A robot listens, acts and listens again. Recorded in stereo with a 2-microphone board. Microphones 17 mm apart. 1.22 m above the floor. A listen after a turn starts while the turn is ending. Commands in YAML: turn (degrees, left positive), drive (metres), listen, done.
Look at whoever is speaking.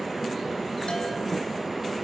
listen: true
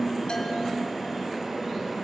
listen: true
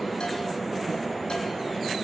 done: "I can't make out anyone speaking."